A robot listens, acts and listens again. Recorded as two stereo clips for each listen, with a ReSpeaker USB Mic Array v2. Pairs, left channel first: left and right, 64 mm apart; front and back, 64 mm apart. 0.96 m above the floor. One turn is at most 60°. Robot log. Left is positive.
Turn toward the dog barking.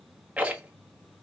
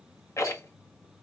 cmd idle
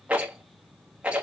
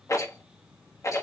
cmd idle
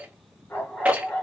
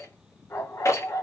note: The dog barking: 30° left.
cmd yaw +30
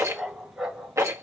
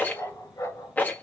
note: The dog barking is now 10° right.
cmd yaw -10
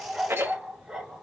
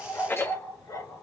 note: The dog barking is now 10° right.
cmd yaw -10
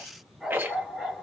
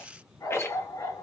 end: Facing the dog barking.